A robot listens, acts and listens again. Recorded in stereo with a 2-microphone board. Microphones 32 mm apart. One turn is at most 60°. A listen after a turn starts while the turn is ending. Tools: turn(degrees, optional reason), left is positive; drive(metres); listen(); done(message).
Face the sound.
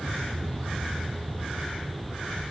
listen()
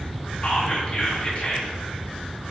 turn(degrees=35, reason="The whispering: about 35° left or 145° left.")
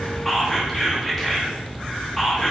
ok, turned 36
done("Facing the whispering, under 1 m away.")